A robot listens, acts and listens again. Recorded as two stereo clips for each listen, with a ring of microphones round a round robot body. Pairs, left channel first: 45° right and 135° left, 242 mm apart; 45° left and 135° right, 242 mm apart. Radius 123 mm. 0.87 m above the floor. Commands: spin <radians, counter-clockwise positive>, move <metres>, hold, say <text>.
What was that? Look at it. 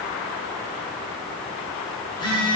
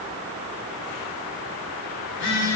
spin 0.44
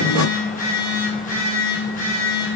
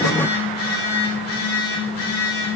spin 0.26
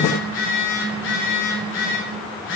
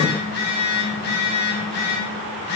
say Facing the phone buzzing.